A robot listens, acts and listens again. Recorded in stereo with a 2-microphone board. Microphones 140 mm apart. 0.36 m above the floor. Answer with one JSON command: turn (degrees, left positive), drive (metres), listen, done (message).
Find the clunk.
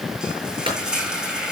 {"turn": -40}
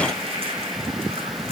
{"listen": true}
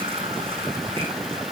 {"done": "I heard a clunk, but can't make it out now. It was about straight ahead or 100° right."}